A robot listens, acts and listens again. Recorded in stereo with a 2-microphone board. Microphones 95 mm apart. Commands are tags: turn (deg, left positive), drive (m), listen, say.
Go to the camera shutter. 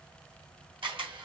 <turn deg="-65"/>
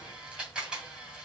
<turn deg="-10"/>
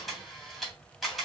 <drive m="1.0"/>
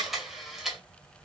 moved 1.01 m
<drive m="1.0"/>
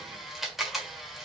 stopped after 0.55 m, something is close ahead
<say>I am next to the camera shutter.</say>